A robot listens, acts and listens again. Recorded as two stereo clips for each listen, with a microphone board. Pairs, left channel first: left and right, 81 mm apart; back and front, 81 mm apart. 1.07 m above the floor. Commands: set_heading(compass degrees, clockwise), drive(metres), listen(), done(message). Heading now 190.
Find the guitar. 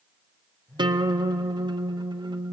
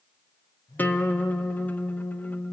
set_heading(300)
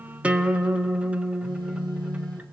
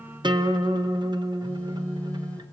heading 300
set_heading(315)
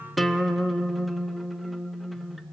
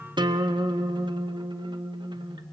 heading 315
done("Facing the guitar.")